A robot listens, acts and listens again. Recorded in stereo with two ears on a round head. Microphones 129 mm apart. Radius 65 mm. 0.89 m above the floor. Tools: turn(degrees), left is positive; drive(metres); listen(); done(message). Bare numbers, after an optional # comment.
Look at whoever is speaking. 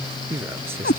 # The man speaking: about 15° right or 165° right.
turn(-15)
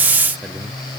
listen()
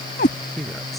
turn(30)
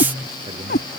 # So it is at 30° right.
turn(-30)
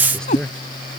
done("Facing the man speaking.")